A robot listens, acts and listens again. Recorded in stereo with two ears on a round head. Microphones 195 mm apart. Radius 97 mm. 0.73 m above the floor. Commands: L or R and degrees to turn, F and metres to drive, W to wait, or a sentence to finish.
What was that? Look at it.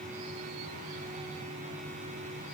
W
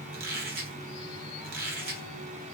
R45
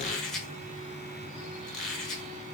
Facing the squeak, 1 to 2 m away.